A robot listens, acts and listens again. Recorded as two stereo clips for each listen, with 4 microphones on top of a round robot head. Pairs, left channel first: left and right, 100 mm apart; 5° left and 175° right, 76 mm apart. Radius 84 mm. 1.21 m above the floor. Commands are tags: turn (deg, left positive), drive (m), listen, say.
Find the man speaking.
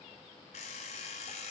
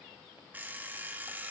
<listen/>
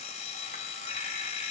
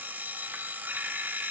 <listen/>
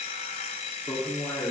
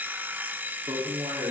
<turn deg="155"/>
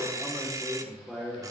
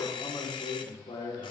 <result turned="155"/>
<say>Facing the man speaking.</say>